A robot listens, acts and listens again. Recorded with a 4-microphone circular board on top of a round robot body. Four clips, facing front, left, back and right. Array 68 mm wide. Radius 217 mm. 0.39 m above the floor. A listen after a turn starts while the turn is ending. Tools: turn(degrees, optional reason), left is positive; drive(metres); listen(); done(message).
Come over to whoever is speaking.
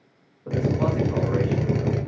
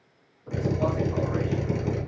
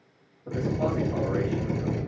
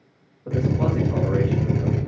turn(degrees=-50, reason="The man speaking: 50° right.")
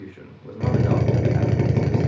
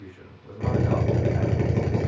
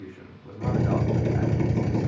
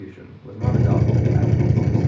turn(degrees=-15, reason="The man speaking is now 15° right.")
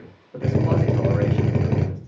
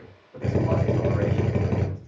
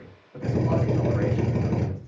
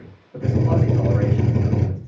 drive(metres=1.0)
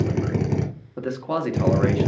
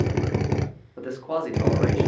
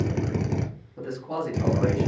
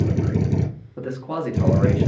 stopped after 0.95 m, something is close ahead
done("Arrived at the man speaking, straight ahead.")